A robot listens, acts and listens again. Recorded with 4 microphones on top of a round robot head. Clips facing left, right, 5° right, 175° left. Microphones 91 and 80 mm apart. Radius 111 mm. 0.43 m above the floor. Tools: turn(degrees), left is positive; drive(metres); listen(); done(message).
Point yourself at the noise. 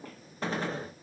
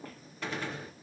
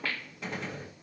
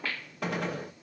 turn(degrees=145)
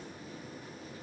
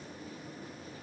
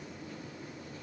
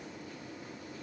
done("I heard a gunshot from this way, but can't make it out now.")